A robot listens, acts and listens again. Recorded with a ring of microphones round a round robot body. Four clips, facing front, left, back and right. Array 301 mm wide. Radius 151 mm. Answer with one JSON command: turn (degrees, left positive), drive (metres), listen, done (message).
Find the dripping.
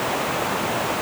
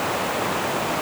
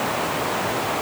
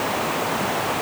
{"listen": true}
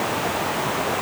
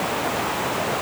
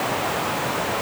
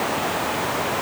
{"listen": true}
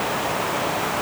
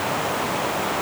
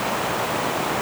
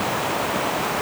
{"done": "I can't make out dripping to turn to."}